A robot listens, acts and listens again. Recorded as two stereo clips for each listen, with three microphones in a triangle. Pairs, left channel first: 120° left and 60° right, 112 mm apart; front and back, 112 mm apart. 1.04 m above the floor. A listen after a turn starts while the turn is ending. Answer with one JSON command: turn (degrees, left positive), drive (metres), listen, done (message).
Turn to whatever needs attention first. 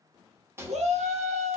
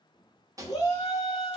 {"turn": -60}
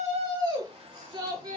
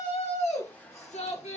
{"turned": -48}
{"turn": -10}
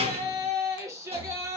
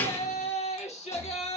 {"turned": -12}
{"done": "Found it: a shout, straight ahead."}